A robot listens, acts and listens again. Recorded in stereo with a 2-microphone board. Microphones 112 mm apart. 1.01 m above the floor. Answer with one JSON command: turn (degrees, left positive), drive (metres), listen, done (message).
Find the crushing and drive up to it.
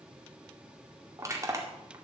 {"turn": -25}
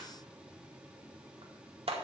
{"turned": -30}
{"turn": -125}
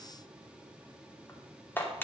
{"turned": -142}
{"turn": 20}
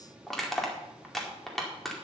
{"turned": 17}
{"drive": 1.0}
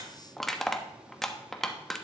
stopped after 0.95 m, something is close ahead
{"done": "Arrived at the crushing, straight ahead."}